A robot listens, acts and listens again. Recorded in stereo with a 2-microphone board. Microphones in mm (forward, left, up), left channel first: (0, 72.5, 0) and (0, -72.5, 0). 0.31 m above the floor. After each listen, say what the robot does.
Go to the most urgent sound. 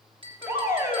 Turn 20° right.
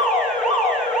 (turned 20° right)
Drive 1.0 m forward.
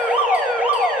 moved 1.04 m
Turn 10° right.
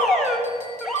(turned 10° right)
Drive 1.0 m forward.
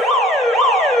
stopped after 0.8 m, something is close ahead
I am next to the alarm.